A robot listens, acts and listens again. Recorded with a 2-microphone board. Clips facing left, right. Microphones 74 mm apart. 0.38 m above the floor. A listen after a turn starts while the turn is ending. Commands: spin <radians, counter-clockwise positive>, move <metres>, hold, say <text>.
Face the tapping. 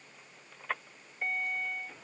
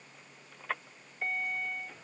hold
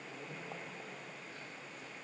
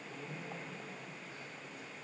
hold
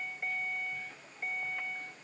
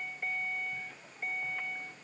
say I can't make out tapping to turn to.